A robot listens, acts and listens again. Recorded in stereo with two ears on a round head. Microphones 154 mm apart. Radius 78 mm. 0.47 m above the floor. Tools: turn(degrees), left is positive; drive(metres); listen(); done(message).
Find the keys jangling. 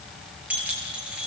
turn(degrees=-30)
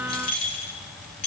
turn(degrees=35)
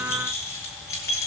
turn(degrees=20)
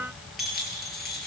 done("Found it: keys jangling, straight ahead.")